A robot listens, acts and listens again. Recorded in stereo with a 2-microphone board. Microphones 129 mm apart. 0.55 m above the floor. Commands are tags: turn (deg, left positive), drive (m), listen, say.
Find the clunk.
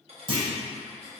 <turn deg="-50"/>
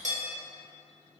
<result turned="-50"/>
<listen/>
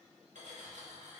<say>I heard a clunk, but can't make it out now. It was about straight ahead or 80° right.</say>